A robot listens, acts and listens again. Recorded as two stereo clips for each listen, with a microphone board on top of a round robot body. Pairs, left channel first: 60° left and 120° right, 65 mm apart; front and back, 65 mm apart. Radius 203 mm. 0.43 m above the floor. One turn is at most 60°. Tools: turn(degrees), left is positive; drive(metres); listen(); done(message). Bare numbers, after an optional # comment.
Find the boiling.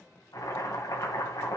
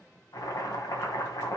# The boiling: 30° left.
turn(30)
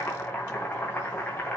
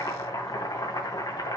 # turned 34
done("Found it: boiling, straight ahead.")